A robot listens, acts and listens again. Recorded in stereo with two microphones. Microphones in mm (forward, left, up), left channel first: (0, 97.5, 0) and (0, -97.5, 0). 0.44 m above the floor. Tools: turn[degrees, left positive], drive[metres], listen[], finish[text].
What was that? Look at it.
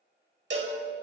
Thought: The cowbell: about 65° right or 115° right.
Action: turn[-65]
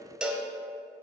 Action: finish[Facing the cowbell.]